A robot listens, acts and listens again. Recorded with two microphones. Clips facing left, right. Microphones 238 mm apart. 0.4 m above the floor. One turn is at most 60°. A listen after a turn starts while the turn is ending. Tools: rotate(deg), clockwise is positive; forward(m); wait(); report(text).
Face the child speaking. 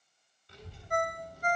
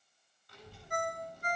rotate(-30)
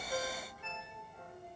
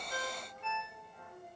rotate(30)
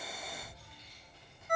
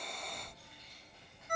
rotate(60)
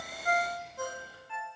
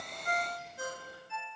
rotate(60)
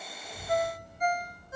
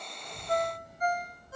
rotate(15)
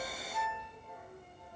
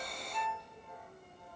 report("Facing the child speaking, 2 to 4 m away.")